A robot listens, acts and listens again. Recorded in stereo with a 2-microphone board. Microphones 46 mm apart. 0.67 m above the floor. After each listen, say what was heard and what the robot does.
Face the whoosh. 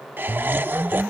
Turn 90° right.
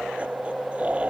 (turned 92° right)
Facing the whoosh.